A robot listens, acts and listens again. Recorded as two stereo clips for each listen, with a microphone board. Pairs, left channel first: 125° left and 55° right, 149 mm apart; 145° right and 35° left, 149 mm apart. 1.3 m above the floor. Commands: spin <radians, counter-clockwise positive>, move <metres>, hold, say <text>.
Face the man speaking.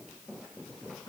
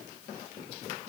hold
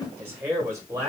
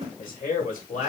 spin -2.09
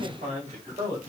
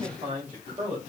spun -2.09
spin -0.26
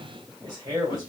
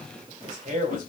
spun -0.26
say Facing the man speaking.